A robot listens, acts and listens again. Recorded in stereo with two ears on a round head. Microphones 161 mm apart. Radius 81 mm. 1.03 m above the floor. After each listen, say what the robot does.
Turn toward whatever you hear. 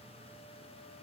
Keep listening.
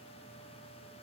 Keep listening.
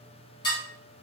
Turn 25° left.
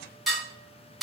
Facing the dishes clattering, 1 to 2 m away.